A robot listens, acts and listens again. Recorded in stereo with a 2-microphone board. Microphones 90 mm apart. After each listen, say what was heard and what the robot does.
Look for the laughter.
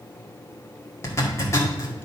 Keep listening.
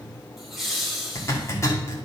Turn 30° left.
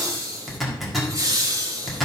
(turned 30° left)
So it is at 40° right. Turn 40° right.
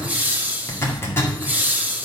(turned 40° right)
The laughter is now 20° right. Turn 20° right.
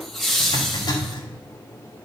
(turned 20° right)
Found it: laughter, straight ahead.